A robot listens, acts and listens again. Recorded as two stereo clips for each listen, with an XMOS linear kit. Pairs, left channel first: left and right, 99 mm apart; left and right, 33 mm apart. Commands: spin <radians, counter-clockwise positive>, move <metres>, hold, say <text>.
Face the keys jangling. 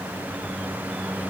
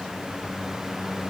hold
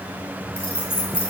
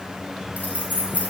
spin 1.13
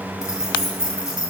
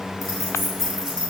spin -0.17
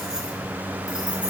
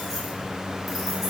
hold
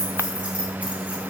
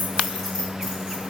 spin -0.26
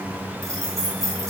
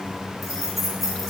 say Facing the keys jangling.